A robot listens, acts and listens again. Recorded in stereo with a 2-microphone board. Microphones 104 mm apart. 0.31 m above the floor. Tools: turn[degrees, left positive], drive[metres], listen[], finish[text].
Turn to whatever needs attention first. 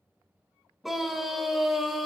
Action: turn[30]
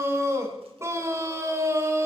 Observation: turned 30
Thought: So it is at 30° right.
Action: turn[-30]
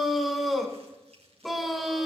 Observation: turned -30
Action: finish[Facing the scream, 1 to 2 m away.]